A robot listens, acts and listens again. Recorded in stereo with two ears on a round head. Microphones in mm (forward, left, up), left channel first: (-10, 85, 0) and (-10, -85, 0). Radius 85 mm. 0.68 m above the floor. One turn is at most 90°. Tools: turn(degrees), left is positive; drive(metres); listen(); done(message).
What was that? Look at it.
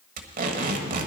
turn(degrees=-50)
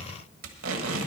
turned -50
turn(degrees=-80)
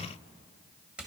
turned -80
done("Facing the tape being pulled, 1 to 2 m away.")